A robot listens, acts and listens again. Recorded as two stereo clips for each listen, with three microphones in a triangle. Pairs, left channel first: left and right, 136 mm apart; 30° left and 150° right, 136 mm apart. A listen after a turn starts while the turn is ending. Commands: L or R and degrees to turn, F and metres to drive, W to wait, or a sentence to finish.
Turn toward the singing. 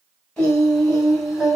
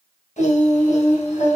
Facing the singing, over 4 m away.